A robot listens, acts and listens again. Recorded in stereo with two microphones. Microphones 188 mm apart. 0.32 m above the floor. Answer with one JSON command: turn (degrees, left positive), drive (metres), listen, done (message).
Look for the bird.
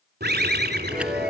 {"turn": -60}
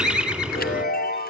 {"done": "Found it: a bird, straight ahead, 1 to 2 m away."}